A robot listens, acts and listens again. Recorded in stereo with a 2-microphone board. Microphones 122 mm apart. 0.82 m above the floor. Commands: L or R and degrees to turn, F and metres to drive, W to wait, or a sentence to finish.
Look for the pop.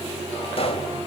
L50
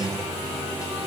W
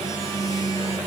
I heard a pop, but can't make it out now. It was about straight ahead or 80° left.